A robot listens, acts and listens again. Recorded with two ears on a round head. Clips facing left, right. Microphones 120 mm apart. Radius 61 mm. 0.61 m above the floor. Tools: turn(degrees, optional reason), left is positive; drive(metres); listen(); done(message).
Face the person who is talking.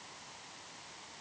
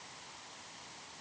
listen()
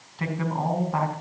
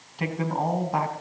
turn(degrees=-20, reason="The man speaking: about 20° right or 160° right.")
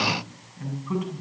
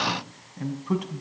turn(degrees=-140, reason="So it is at 140° right.")
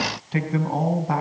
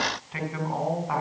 turn(degrees=35, reason="The man speaking is now 35° left.")
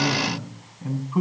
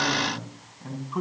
turn(degrees=10, reason="The man speaking is now 10° left.")
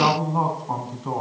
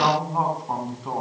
done("Found it: a man speaking, straight ahead.")